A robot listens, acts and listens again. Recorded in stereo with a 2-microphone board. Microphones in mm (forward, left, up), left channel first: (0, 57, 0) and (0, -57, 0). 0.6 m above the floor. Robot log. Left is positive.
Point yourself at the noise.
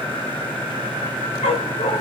note: The dog barking: about 70° left or 110° left.
cmd yaw +70
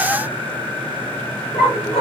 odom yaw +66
note: So it is at 55° left.
cmd yaw +55
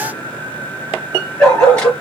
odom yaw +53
note: The dog barking is now 10° left.
cmd yaw +10
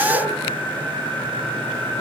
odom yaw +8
cmd idle
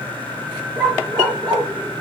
end: Facing the dog barking.